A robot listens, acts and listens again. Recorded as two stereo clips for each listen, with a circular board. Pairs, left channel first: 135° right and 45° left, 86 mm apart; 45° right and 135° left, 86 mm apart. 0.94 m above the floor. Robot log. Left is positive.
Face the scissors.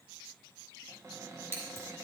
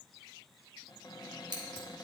note: The scissors: 100° left.
cmd yaw +100
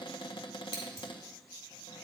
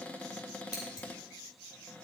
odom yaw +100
note: The scissors is now 10° right.
cmd yaw -10
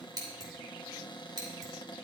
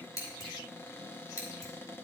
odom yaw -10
end: Facing the scissors, 2 to 4 m away.